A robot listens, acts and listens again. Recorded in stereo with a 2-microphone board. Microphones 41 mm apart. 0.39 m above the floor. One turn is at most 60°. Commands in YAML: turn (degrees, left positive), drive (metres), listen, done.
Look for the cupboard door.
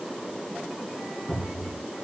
turn: 30
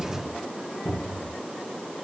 turn: 60
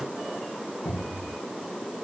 turn: 60
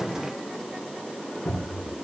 turn: 35
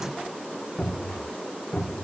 turn: 10
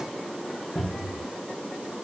done: "Found it: a cupboard door, straight ahead."